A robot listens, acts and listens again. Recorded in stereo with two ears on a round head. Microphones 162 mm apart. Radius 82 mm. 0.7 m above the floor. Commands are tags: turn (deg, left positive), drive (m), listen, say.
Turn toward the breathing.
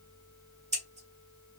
<listen/>
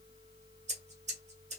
<listen/>
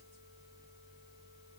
<say>I can't make out breathing to turn to.</say>